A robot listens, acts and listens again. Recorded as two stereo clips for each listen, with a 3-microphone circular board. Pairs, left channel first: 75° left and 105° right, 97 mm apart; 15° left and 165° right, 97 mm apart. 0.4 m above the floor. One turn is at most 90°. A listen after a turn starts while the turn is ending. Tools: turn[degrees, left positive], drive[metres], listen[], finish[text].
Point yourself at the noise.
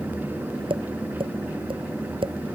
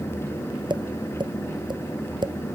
Thought: The tapping: 130° right.
Action: turn[-90]
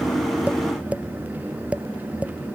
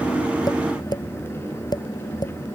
Thought: The tapping is now 30° right.
Action: turn[-30]
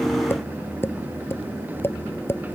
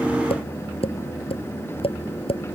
Thought: The tapping is now 10° left.
Action: turn[10]
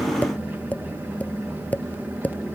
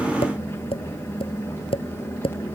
Action: finish[Found it: tapping, straight ahead.]